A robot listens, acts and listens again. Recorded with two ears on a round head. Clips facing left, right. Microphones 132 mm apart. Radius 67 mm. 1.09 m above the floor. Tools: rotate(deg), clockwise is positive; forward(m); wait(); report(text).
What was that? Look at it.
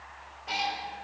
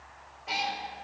rotate(-30)
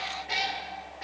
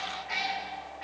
rotate(-135)
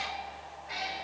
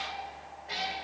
rotate(35)
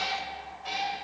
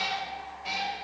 rotate(10)
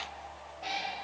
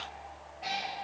report("Found it: a cat meowing, straight ahead.")